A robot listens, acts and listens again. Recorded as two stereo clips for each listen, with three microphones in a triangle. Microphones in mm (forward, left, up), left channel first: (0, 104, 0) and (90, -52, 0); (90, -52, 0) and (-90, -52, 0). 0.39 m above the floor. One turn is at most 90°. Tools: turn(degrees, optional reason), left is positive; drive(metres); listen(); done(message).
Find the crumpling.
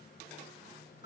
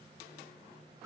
listen()
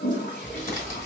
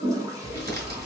turn(degrees=90, reason="The crumpling: 155° left.")
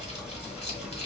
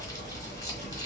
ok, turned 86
turn(degrees=70, reason="The crumpling is now 70° left.")
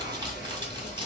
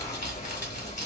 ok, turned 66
done("Found it: crumpling, straight ahead.")